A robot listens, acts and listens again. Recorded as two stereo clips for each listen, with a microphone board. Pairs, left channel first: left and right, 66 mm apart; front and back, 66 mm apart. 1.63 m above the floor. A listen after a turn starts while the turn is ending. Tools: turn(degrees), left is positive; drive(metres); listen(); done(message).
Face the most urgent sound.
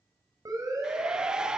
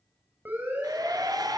turn(degrees=-120)
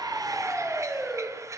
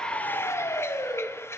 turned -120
done("Facing the siren, over 4 m away.")